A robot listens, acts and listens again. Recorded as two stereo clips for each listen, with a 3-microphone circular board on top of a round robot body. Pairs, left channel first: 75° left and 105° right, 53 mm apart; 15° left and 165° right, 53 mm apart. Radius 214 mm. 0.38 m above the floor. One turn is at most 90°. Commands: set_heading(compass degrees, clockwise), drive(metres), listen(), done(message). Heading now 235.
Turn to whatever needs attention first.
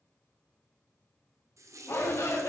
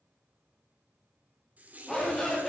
set_heading(145)
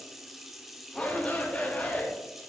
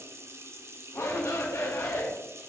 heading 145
set_heading(135)
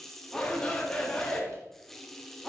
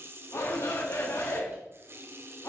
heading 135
done("Found it: a shout, straight ahead.")